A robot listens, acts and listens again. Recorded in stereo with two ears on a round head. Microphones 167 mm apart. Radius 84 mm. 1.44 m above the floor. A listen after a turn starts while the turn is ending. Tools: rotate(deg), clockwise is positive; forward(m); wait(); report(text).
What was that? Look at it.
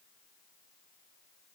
wait()
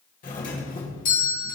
rotate(-45)
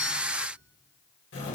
rotate(-85)
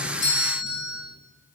rotate(-35)
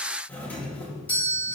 rotate(-10)
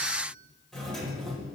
report("Facing the doorbell.")